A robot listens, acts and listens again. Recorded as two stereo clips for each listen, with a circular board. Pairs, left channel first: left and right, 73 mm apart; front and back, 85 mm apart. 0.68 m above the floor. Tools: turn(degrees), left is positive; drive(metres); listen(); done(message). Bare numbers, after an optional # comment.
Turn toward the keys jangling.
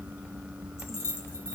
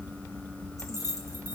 # The keys jangling: 40° left.
turn(40)
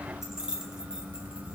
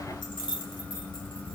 # The keys jangling is now 10° right.
turn(-10)
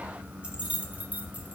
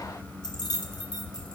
# The keys jangling is now 25° right.
turn(-25)
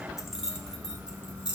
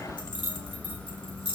# The keys jangling is now 20° right.
turn(-20)
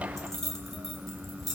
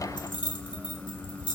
done("Facing the keys jangling, 2 to 4 m away.")